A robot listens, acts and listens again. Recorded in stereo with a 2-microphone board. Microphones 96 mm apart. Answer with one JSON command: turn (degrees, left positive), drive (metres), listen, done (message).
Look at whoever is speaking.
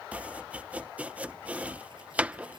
{"listen": true}
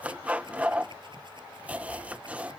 {"listen": true}
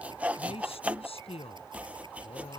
{"turn": 90}
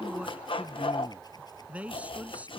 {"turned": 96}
{"turn": -15}
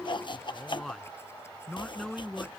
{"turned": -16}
{"done": "Facing the man speaking."}